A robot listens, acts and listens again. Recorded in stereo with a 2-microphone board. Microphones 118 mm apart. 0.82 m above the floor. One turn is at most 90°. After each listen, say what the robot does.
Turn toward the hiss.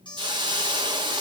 Turn 40° right.
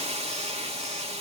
Turn 90° right.
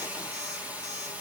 Turn 15° right.
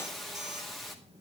Found it: a hiss, straight ahead, 1 to 2 m away.